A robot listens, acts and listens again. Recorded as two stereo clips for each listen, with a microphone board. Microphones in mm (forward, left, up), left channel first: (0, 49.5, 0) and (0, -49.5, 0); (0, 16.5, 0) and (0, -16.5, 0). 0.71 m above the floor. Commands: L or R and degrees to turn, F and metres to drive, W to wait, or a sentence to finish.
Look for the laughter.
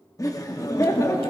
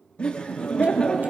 L35
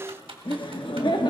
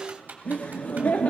L100
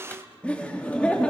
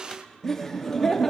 L15
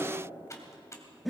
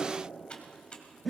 Facing the laughter.